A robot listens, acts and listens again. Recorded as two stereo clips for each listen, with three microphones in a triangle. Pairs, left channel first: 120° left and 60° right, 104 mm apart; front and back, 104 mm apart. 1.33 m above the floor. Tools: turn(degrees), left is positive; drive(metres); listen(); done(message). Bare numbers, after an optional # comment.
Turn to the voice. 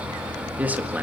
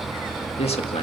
# The man speaking: 15° left.
turn(15)
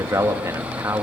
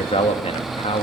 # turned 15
done("Found it: a man speaking, straight ahead, 1 to 2 m away.")